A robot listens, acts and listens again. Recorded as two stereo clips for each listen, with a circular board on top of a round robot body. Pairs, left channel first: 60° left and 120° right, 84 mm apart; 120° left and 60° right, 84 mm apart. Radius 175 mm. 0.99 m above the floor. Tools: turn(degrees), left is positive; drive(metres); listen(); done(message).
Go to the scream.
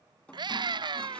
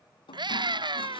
turn(degrees=-90)
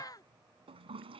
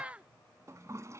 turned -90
turn(degrees=15)
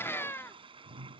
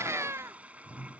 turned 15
drive(metres=1.0)
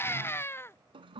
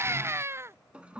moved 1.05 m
drive(metres=1.0)
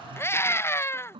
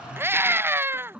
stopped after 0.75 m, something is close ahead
done("I am next to the scream.")